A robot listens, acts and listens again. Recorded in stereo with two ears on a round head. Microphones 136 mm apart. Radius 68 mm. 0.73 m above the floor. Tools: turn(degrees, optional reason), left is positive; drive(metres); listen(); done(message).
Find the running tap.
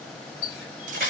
turn(degrees=65, reason="The running tap: about 65° left or 115° left.")
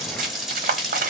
done("Found it: a running tap, straight ahead, 1 to 2 m away.")